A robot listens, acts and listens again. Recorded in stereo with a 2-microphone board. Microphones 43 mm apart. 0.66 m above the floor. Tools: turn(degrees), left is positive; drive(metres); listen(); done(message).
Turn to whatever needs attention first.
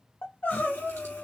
turn(degrees=50)
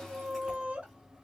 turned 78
turn(degrees=-30)
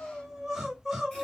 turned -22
done("Facing the crying.")